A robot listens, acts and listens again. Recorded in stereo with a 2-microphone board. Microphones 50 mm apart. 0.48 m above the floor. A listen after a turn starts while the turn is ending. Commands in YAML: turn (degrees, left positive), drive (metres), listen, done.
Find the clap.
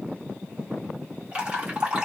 listen: true
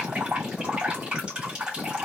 listen: true
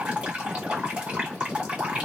done: "I can't make out a clap to turn to."